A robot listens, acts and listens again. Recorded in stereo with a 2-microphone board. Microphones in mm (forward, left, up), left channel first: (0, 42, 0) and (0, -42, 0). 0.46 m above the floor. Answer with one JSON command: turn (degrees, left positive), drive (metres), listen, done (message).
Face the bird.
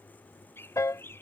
{"turn": 30}
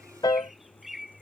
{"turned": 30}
{"done": "Facing the bird."}